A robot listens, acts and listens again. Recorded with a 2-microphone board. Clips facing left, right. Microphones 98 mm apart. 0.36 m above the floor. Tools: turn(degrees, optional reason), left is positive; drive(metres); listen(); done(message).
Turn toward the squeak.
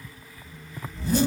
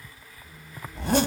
turn(degrees=-40, reason="The squeak: about 40° right or 140° right.")
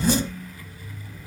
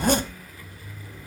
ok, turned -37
turn(degrees=-100, reason="So it is at 100° right.")
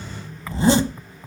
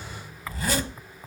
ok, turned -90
turn(degrees=-10, reason="The squeak is now 10° right.")
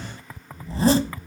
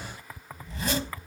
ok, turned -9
done("Facing the squeak.")